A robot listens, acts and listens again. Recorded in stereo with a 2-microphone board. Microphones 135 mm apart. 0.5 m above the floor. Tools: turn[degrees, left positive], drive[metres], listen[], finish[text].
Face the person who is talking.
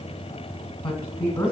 Thought: The woman speaking: about 35° left or 145° left.
Action: turn[35]
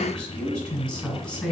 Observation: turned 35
Action: finish[Found it: a woman speaking, straight ahead.]